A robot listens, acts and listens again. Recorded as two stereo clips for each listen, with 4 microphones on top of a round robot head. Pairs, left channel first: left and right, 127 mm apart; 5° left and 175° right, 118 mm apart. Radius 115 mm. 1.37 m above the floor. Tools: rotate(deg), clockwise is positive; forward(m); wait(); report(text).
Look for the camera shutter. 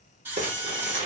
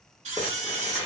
rotate(165)
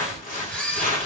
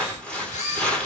rotate(-10)
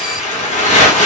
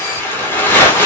wait()
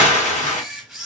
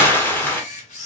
report("Found it: a camera shutter, straight ahead.")